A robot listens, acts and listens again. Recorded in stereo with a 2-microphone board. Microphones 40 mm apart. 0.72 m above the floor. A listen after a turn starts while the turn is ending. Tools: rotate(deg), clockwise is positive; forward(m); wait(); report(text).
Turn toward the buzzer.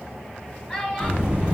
rotate(25)
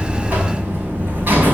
rotate(130)
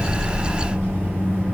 rotate(50)
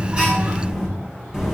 report("Facing the buzzer, over 4 m away.")